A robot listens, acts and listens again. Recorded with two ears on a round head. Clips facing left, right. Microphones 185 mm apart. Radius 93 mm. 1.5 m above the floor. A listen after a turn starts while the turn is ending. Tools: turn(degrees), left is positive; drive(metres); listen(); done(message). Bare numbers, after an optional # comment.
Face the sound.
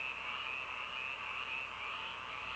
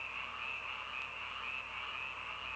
listen()
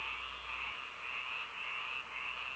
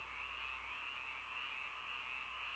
listen()
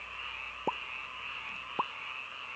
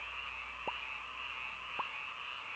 # The pop: about 60° left or 120° left.
turn(60)
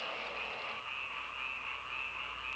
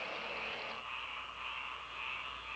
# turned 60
listen()
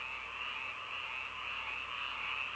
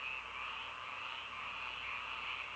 done("I heard a pop, but can't make it out now. It was about straight ahead or 60° left.")